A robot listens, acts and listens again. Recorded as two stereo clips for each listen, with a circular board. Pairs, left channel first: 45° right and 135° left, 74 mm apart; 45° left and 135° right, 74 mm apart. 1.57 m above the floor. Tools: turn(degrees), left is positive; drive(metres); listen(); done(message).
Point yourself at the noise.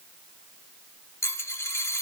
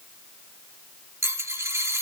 turn(degrees=-90)
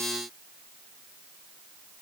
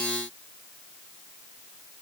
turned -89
done("I heard a dropped coin from this way, but can't make it out now.")